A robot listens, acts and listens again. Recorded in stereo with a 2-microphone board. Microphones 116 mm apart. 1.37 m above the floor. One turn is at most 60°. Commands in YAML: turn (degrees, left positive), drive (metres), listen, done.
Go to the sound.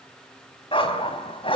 turn: 50
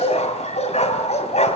turn: 60
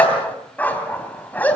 turn: 15
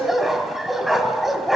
drive: 1.0
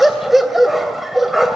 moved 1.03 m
drive: 1.0
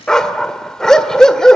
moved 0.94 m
drive: 1.0
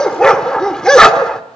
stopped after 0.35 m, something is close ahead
turn: 10
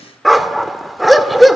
done: "Arrived at the dog barking, straight ahead."